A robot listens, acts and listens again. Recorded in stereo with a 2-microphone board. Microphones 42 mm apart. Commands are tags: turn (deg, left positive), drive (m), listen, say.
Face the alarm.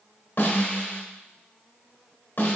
<listen/>
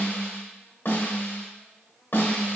<listen/>
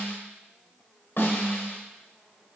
<say>I can't make out an alarm to turn to.</say>